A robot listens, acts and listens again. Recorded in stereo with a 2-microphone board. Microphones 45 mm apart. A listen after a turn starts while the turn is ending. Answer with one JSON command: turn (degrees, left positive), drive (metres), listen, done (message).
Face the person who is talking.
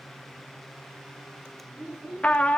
{"turn": -30}
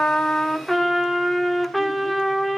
{"listen": true}
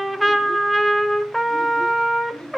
{"turn": 15}
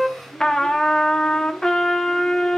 {"listen": true}
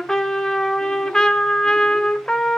{"listen": true}
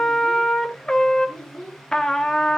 {"done": "Facing the child speaking."}